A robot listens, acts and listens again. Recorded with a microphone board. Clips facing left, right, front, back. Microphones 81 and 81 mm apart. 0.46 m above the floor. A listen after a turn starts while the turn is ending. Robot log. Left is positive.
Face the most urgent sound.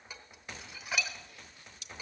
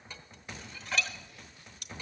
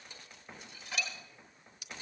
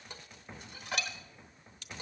cmd idle
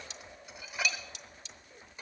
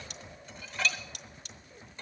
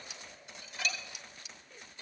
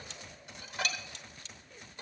cmd idle
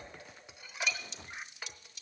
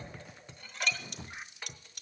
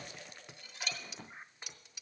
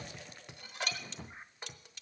end: I can't make out anything urgent to turn to.